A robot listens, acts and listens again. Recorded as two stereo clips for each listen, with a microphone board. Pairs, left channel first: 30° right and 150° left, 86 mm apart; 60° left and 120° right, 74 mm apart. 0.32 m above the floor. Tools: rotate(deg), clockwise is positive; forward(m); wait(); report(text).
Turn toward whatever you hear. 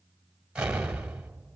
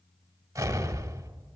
rotate(135)
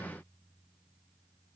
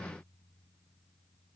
report("Facing where the explosion came from. I can't hear it now.")